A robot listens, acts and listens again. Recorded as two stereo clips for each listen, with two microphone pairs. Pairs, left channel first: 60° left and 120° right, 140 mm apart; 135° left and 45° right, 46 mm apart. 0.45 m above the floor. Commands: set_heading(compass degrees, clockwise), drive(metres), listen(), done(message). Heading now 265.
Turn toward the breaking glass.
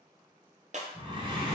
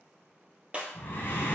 set_heading(10)
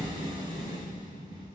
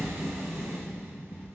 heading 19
set_heading(9)
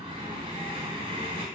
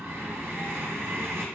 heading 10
done("Facing where the breaking glass came from. I can't hear it now.")